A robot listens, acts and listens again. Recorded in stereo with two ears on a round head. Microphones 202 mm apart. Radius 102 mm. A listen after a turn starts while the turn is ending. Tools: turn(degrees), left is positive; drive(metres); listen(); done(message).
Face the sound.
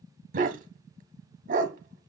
turn(degrees=-35)
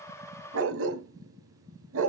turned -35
turn(degrees=-95)
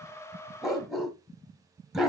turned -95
done("Found it: a dog barking, straight ahead.")